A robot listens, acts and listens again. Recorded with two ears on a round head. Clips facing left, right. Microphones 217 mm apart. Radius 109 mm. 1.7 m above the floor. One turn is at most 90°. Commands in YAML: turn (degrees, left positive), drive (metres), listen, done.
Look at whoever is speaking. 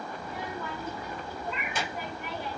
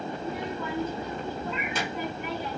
turn: -70
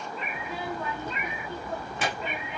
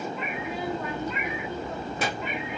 turn: -35
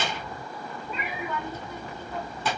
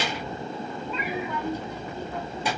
turn: -15
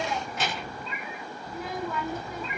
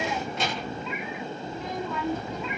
done: "Facing the child speaking, 2 to 4 m away."